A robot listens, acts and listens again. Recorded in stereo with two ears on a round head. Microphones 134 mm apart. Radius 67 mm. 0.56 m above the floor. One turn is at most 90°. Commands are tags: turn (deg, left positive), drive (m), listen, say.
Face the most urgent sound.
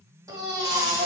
<turn deg="-20"/>
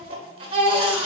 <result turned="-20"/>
<turn deg="-90"/>
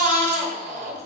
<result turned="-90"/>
<turn deg="-55"/>
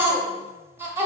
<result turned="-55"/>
<turn deg="-15"/>
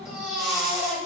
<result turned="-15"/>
<say>Facing the baby crying.</say>